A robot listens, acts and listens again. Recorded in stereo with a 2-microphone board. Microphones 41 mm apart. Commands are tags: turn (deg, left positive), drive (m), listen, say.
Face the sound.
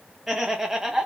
<turn deg="-30"/>
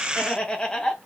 <turn deg="20"/>
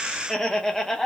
<turn deg="10"/>
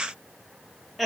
<say>Found it: laughter, straight ahead, under 1 m away.</say>